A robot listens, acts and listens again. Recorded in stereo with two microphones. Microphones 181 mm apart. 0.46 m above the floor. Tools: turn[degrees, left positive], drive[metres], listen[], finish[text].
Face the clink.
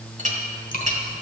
Thought: The clink: about 45° right or 135° right.
Action: turn[-45]
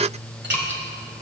Action: listen[]
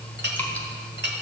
Thought: So it is at 90° right.
Action: turn[-90]
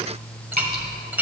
Thought: The clink is now 10° right.
Action: turn[-10]
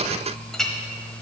Action: finish[Facing the clink.]